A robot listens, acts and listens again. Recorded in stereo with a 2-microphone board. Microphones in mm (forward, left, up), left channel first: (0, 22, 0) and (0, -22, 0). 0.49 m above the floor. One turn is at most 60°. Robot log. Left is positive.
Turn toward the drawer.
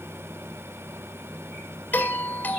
cmd idle
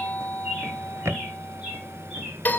note: The drawer: about 70° right or 110° right.
cmd yaw -60
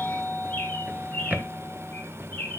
note: So it is at 40° right.
cmd yaw -40
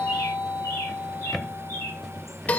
end: Found it: a drawer, straight ahead.